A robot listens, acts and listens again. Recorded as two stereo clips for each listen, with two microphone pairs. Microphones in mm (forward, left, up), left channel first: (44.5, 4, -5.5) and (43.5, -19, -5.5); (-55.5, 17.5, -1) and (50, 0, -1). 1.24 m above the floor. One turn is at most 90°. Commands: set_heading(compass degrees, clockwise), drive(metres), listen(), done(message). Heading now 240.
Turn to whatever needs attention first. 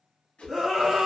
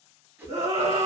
set_heading(255)
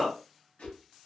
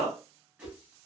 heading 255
done("Found it: a scream, straight ahead.")